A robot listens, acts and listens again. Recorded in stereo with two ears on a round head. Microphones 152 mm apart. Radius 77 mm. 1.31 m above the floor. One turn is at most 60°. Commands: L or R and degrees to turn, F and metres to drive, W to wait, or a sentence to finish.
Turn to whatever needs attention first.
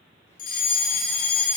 L55
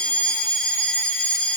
Found it: a fire alarm, straight ahead.